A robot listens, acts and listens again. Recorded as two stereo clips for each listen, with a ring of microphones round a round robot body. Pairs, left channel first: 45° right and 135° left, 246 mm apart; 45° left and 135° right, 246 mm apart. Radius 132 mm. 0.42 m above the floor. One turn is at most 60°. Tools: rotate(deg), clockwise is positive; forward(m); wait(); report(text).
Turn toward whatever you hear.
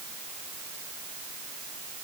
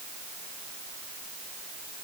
wait()
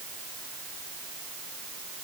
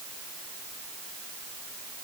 wait()
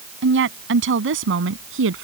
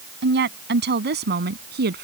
rotate(-60)
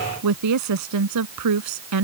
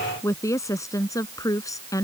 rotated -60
rotate(-60)
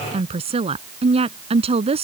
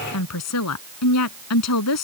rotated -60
rotate(-60)
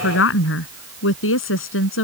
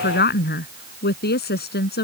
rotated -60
report("Found it: a woman speaking, straight ahead.")